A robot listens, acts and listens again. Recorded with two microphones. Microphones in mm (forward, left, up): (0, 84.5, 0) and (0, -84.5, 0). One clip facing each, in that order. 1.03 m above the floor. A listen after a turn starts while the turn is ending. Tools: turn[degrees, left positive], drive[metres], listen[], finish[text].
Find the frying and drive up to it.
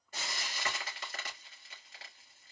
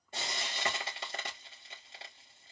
Thought: The frying: about 25° right or 155° right.
Action: turn[-25]
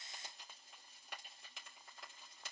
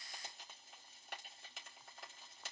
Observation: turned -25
Action: drive[1.0]
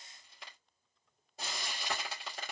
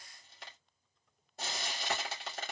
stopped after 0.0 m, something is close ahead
Action: finish[Something is in my way. I am facing the frying but have not reached it.]